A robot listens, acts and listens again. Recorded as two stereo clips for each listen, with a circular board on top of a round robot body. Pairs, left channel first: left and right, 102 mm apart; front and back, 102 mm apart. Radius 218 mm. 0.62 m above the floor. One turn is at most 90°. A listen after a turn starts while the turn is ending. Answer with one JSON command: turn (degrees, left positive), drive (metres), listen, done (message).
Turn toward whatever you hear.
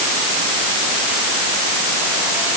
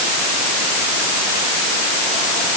{"listen": true}
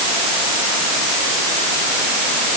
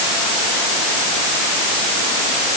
{"listen": true}
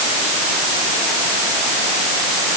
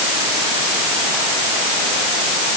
{"done": "I can't make out anything."}